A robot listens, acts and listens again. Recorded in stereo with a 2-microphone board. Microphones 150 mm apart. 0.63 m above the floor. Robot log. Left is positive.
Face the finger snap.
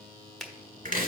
cmd yaw +30
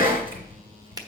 note: So it is at 25° right.
cmd yaw -25
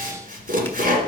cmd idle
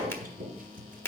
note: The finger snap is now 15° left.
cmd yaw +15
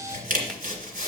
cmd idle
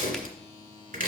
cmd idle
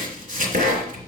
end: Facing where the finger snap came from. I can't hear it now.